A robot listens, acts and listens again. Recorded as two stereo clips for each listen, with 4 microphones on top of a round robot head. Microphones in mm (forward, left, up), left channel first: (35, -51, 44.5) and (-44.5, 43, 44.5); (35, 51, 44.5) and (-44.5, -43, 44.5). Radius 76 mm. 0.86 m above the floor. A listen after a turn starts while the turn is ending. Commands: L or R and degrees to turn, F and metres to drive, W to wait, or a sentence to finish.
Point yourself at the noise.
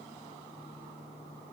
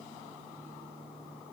W
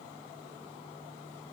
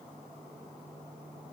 W
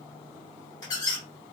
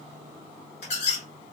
L10
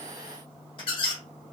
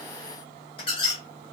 Found it: a squeak, straight ahead.